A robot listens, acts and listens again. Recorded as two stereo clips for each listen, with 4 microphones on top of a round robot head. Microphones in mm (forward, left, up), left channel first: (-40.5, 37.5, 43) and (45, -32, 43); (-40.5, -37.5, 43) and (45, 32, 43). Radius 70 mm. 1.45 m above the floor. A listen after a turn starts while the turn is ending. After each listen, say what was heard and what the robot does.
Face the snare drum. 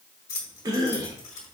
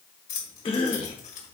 Keep listening.
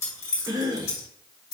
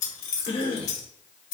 Keep listening.
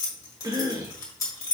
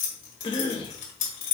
I can't make out a snare drum, only keys jangling and a cough.